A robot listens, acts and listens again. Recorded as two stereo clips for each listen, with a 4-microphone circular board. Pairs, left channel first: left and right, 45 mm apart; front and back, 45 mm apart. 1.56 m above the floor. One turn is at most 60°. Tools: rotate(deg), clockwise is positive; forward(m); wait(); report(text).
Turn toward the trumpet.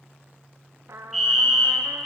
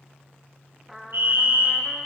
rotate(60)
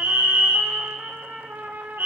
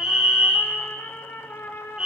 rotate(35)
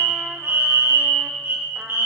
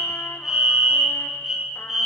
wait()
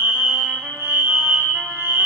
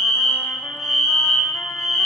wait()
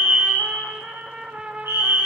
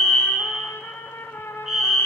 rotate(25)
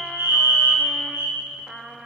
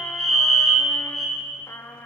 report("Found it: a trumpet, straight ahead, under 1 m away.")